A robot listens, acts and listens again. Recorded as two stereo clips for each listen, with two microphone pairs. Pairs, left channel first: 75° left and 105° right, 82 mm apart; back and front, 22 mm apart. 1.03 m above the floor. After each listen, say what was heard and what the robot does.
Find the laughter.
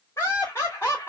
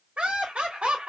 The laughter: 15° left. Turn 15° left.
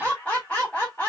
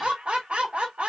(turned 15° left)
Facing the laughter.